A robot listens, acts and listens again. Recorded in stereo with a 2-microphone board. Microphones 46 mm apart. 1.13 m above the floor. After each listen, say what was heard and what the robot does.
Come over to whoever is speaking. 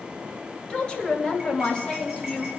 The woman speaking: about 20° left or 160° left. Turn 20° left.
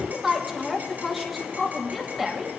Drive 1.0 m forward.
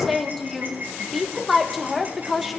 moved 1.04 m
Drive 1.0 m forward.
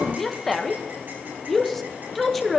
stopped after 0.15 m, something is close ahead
Arrived at the woman speaking, straight ahead.